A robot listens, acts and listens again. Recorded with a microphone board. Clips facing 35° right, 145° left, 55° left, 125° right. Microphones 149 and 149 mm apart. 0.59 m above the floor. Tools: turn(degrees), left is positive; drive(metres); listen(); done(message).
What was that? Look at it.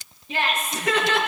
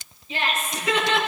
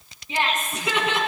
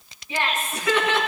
turn(degrees=-10)
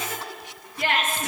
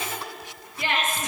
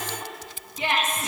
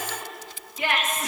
done("Facing the laughter, over 4 m away.")